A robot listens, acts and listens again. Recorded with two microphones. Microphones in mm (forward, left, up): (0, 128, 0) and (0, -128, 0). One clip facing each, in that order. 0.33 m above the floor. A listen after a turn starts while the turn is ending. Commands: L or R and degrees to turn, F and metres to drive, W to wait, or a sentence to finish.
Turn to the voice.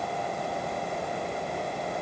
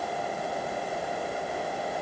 W
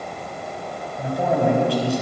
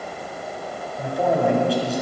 L30
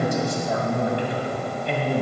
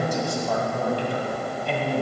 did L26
L155
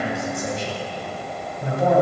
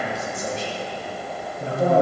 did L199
R40
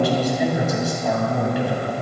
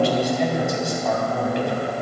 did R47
Found it: a man speaking, straight ahead.